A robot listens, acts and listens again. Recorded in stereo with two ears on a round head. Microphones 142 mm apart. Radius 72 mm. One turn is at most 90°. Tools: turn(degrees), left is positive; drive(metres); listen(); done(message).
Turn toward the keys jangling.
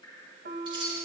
turn(degrees=-30)
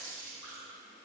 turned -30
turn(degrees=-90)
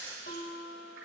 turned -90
turn(degrees=-15)
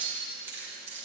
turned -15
turn(degrees=-15)
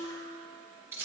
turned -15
turn(degrees=-15)
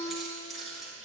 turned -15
done("Found it: keys jangling, straight ahead, 2 to 4 m away.")